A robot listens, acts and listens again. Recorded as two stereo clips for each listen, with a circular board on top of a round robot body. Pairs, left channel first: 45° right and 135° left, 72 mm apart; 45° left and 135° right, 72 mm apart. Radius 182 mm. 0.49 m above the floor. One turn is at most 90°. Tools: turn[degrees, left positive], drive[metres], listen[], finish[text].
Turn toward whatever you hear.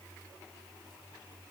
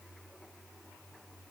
Action: listen[]
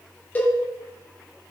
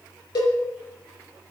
Thought: The cowbell: 25° left.
Action: turn[25]
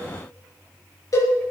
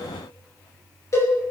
Action: finish[Found it: a cowbell, straight ahead, over 4 m away.]